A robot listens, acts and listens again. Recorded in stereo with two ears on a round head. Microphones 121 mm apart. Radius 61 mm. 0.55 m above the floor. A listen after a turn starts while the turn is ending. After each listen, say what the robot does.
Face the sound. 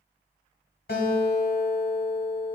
Turn 90° left.
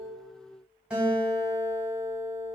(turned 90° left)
Turn 10° right.
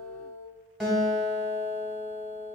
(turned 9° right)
Found it: a guitar, straight ahead.